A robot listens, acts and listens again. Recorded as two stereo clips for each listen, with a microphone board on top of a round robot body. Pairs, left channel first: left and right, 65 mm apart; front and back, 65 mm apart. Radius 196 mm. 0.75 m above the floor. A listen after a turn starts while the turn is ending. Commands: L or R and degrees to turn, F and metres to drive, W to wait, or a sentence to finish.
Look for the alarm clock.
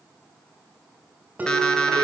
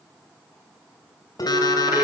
L10
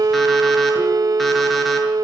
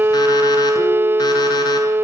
W
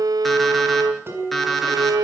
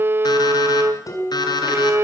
Facing the alarm clock, over 4 m away.